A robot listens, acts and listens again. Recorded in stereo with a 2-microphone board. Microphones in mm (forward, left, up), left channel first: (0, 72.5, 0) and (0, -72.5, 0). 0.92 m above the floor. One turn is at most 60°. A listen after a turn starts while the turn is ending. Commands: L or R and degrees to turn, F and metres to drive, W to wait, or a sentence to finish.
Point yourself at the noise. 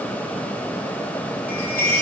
L60
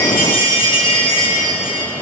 L35
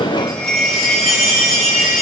Facing the chime.